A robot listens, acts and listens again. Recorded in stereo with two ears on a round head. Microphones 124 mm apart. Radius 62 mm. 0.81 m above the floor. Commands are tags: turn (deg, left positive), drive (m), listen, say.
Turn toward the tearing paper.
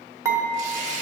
<turn deg="-50"/>
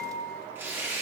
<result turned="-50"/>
<turn deg="-15"/>
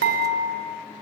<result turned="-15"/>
<listen/>
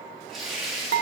<say>Found it: tearing paper, straight ahead, 1 to 2 m away.</say>